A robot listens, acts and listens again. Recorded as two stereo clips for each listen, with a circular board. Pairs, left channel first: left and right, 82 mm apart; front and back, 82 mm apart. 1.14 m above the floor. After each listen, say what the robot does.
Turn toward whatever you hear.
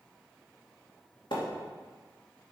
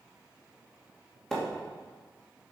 Turn 85° left.
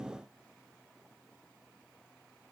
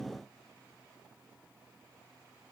Facing where the splash came from. I can't hear it now.